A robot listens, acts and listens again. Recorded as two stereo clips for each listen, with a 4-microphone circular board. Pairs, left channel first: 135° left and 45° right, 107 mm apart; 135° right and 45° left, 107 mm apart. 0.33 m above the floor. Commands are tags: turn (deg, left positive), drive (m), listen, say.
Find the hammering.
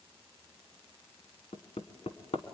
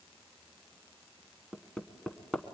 <turn deg="140"/>
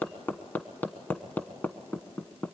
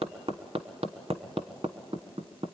<turn deg="65"/>
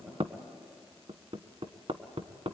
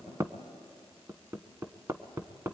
<turn deg="-15"/>
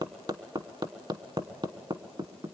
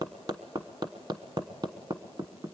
<say>Facing the hammering, 1 to 2 m away.</say>